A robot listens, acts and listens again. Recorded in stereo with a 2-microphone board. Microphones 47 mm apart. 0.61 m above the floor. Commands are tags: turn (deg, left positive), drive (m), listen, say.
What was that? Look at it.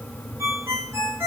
<turn deg="-90"/>
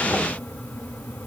<listen/>
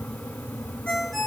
<turn deg="10"/>
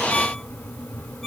<say>Found it: a ringtone, straight ahead, 2 to 4 m away.</say>